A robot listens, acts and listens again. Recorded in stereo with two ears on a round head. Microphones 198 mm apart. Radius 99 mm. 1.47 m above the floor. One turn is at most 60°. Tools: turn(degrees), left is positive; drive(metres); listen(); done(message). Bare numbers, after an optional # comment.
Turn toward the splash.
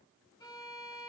listen()
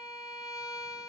listen()
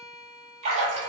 # The splash: about 35° right or 145° right.
turn(-35)
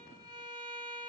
listen()
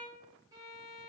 done("I heard a splash, but can't make it out now. It was about straight ahead or 110° right.")